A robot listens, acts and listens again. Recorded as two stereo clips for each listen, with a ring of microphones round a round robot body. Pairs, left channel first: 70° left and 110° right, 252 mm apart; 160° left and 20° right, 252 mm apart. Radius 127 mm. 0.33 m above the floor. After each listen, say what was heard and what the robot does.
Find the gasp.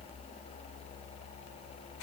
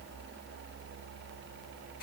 Keep listening.
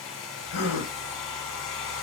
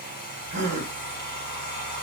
The gasp: 40° left. Turn 40° left.
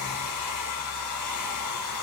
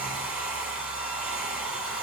Facing where the gasp came from. I can't hear it now.